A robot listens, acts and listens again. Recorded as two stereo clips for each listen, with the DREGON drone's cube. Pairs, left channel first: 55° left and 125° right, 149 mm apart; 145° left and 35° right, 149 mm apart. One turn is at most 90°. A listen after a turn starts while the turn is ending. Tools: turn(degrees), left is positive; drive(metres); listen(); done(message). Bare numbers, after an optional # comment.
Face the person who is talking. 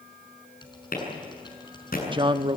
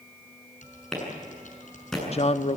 # The man speaking: 175° right.
turn(-90)
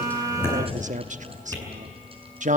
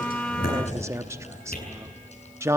# The man speaking is now 105° right.
turn(-90)
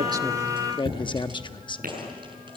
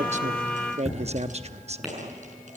done("Found it: a man speaking, straight ahead.")